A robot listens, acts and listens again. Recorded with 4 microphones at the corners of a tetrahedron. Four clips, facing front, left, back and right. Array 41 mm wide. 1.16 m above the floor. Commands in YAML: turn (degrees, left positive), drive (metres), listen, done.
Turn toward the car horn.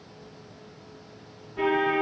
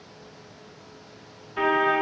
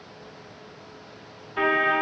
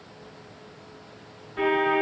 turn: 150
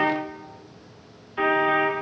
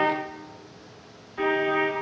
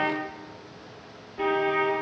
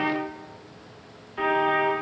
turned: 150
turn: -10
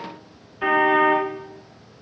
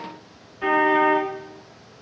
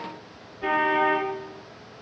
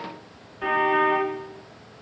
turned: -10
done: "Found it: a car horn, straight ahead."